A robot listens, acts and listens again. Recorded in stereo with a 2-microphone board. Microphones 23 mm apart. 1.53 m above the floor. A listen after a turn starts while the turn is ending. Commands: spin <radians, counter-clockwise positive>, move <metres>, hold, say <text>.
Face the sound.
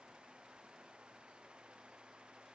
hold
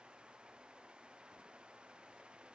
hold
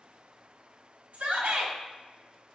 spin -1.57
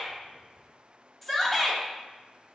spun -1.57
spin 0.17
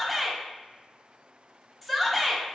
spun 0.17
say Found it: a shout, straight ahead.